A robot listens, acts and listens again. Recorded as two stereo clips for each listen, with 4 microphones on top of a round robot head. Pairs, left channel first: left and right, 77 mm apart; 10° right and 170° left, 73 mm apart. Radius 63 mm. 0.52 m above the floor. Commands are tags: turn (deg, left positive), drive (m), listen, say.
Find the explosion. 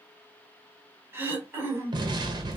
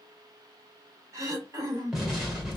<turn deg="-105"/>
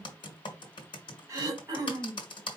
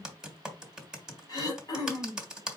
<say>I heard an explosion from this way, but can't make it out now.</say>